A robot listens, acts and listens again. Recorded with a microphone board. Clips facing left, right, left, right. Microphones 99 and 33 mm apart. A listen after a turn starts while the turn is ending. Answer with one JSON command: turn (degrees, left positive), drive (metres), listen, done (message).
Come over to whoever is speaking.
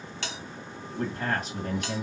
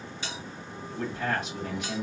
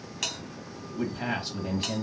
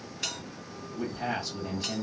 {"turn": 40}
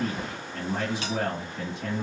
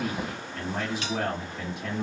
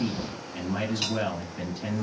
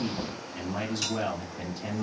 {"turn": 100}
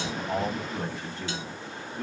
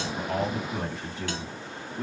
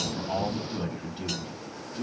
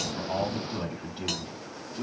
{"turn": -10}
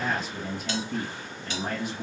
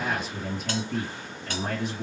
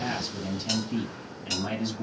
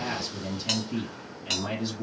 {"drive": 1.0}
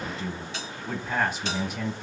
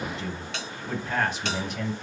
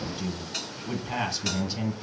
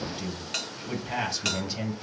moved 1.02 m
{"drive": 1.0}
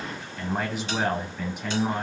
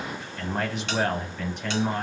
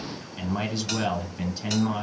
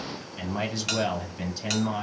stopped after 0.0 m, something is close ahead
{"done": "Arrived at the man speaking, straight ahead."}